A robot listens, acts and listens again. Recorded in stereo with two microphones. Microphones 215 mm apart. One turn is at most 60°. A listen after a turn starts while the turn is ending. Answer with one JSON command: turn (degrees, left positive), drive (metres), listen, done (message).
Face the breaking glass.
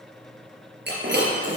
{"turn": -55}
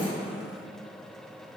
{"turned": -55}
{"listen": true}
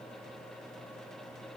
{"done": "I heard breaking glass, but can't make it out now. It was about straight ahead or 70° right."}